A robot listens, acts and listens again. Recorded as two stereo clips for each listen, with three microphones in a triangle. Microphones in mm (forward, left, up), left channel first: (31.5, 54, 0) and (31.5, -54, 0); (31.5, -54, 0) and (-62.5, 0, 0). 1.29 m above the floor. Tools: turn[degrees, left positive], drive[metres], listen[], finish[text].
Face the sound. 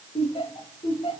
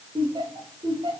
Thought: The laughter: 115° left.
Action: turn[115]
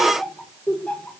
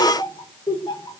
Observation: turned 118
Thought: The laughter is now 15° left.
Action: turn[15]
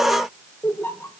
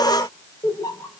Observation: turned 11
Thought: The laughter is now 20° left.
Action: turn[20]
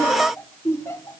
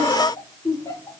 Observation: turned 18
Thought: The laughter is now 25° left.
Action: turn[25]
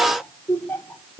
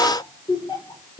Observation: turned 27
Thought: The laughter is now 20° left.
Action: turn[20]
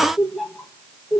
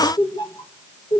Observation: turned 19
Action: finish[Found it: laughter, straight ahead.]